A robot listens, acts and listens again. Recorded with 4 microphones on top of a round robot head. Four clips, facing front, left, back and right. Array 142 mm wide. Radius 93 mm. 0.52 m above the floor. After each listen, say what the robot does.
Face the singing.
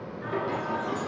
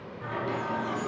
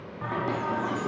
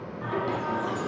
Turn 150° right.
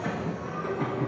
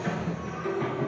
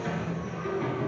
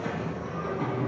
Turn 30° right.
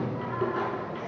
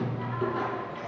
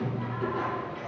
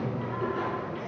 Found it: singing, straight ahead, over 4 m away.